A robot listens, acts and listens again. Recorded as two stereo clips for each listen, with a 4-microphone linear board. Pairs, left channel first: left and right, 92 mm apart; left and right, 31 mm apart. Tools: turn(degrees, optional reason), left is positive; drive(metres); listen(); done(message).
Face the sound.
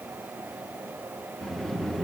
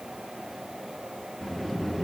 turn(degrees=30)
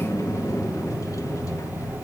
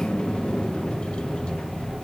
turn(degrees=145, reason="So it is at 145° left.")
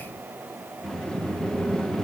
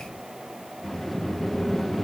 done("Found it: a sliding door, straight ahead, under 1 m away.")